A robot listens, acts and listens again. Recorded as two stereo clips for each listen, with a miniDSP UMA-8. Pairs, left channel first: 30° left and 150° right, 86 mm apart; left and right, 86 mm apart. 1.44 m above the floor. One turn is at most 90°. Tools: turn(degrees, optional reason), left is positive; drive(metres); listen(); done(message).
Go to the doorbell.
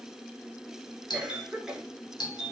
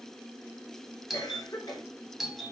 drive(metres=1.0)
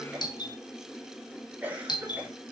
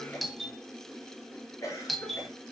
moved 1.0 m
drive(metres=1.0)
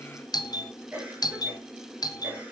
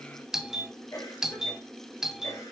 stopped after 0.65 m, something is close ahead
done("I am next to the doorbell.")